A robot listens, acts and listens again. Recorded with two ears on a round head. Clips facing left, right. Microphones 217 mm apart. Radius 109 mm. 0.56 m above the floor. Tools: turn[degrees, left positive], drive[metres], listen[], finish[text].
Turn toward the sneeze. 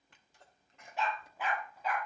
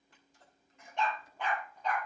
Thought: The sneeze: about 60° left or 120° left.
Action: turn[60]
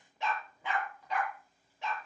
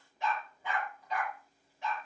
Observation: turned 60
Action: listen[]
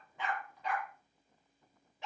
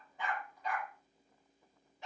Action: finish[I heard a sneeze, but can't make it out now. It was about straight ahead or 60° left.]